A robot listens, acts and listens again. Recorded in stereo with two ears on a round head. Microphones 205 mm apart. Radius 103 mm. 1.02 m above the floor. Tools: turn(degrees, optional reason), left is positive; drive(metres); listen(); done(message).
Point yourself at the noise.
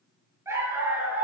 turn(degrees=-30)
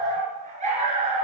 turn(degrees=-150, reason="So it is at 150° right.")
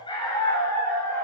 turn(degrees=15, reason="The dog barking is now 15° left.")
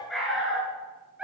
done("Facing the dog barking, over 4 m away.")